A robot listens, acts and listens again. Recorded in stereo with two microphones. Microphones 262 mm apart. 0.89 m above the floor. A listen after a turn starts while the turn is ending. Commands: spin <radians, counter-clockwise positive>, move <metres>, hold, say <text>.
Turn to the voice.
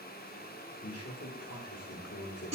spin 1.05
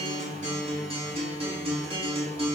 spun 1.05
hold
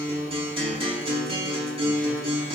hold
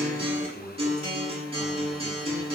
say Facing the man speaking, 2 to 4 m away.